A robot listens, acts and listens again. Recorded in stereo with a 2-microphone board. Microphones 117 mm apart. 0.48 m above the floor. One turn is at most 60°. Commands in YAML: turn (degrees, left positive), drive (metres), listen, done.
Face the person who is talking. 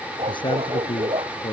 turn: 45
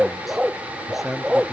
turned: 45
done: "Facing the man speaking."